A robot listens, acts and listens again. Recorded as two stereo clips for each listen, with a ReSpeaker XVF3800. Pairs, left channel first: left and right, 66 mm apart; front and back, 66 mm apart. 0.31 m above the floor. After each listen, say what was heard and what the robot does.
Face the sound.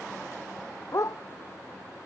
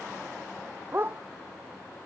The dog barking: 125° left. Turn 125° left.
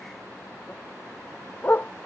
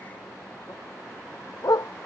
The dog barking is now 30° left. Turn 30° left.
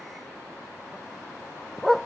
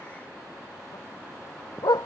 Facing the dog barking.